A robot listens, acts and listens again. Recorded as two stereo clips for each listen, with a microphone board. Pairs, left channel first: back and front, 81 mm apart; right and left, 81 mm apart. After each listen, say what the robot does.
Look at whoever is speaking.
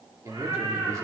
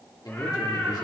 Turn 55° right.
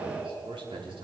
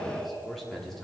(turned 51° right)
Found it: a man speaking, straight ahead.